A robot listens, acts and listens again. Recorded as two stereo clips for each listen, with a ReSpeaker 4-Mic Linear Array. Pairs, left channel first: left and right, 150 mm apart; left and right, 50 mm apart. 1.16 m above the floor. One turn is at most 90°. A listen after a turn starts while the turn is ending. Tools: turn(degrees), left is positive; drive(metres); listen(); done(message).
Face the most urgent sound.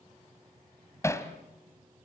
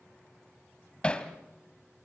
listen()
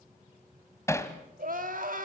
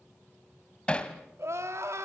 turn(degrees=-70)
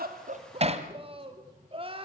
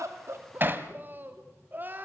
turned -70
turn(degrees=-40)
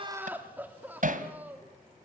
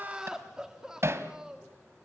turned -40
turn(degrees=-10)
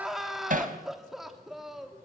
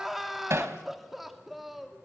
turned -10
done("Found it: crying, straight ahead, 2 to 4 m away.")